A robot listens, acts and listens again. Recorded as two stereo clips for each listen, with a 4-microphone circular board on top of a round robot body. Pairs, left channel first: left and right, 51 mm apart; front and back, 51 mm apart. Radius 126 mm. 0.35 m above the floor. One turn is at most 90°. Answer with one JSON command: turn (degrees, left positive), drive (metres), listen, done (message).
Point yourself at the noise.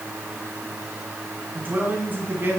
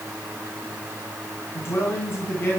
{"turn": -45}
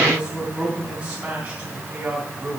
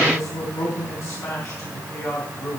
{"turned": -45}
{"turn": -30}
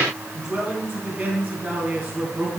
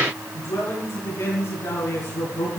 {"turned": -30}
{"turn": -20}
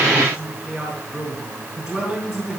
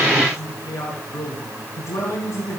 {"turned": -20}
{"done": "Found it: a man speaking, straight ahead."}